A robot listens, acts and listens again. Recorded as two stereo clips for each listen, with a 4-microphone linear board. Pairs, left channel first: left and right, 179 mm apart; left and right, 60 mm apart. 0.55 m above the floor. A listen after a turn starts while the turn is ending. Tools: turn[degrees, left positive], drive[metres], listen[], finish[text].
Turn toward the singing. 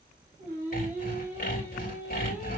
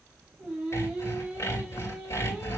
Action: turn[-30]
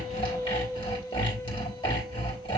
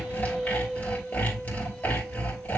Thought: So it is at 20° left.
Action: turn[20]
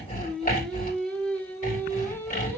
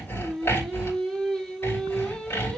Thought: The singing is now 10° left.
Action: turn[10]
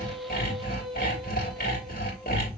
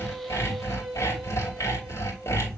Action: finish[Facing the singing.]